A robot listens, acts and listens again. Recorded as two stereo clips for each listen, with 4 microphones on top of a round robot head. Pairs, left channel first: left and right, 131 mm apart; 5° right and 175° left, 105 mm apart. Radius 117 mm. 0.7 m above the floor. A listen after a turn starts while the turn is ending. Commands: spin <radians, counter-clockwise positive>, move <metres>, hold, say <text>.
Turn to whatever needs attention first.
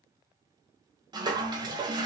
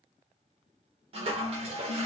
hold
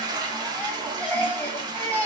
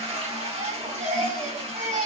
spin 2.97
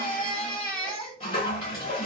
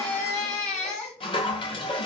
say Facing the baby crying.